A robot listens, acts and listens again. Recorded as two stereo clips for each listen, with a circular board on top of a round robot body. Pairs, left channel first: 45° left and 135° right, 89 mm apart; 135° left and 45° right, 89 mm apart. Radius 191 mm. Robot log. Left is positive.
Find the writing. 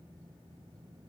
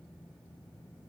cmd idle
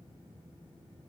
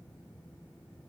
cmd idle
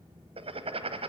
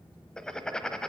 note: The writing: 145° right.
cmd yaw -145
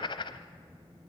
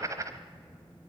note: The writing is now 10° left.
cmd yaw +10
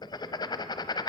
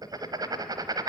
end: Found it: writing, straight ahead.